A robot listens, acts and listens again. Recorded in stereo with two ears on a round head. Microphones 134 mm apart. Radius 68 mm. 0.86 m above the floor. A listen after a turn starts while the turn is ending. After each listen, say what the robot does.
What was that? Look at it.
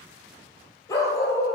Turn 20° left.
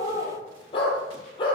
Turn 35° left.
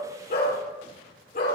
Turn 115° left.
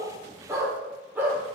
Turn 10° right.
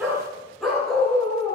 Found it: a dog barking, straight ahead, over 4 m away.